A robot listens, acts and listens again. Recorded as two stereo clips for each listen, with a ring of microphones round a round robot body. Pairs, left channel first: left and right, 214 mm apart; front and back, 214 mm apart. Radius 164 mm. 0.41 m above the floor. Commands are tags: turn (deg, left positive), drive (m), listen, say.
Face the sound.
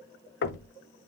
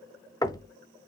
<turn deg="70"/>
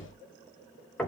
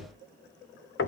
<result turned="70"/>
<say>Found it: knocking, straight ahead, under 1 m away.</say>